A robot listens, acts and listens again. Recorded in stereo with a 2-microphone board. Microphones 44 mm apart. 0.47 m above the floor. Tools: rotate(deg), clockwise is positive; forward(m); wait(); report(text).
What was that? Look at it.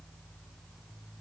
wait()
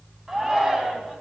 rotate(30)
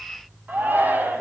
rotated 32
rotate(135)
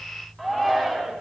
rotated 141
report("Found it: a shout, straight ahead.")